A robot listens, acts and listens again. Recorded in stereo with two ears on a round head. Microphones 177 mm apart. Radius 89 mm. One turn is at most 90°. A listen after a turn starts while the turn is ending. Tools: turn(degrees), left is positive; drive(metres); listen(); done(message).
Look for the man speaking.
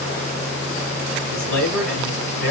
turn(degrees=50)
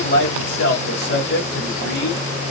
turn(degrees=70)
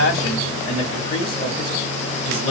turn(degrees=30)
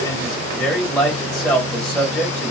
done("Facing the man speaking, 1 to 2 m away.")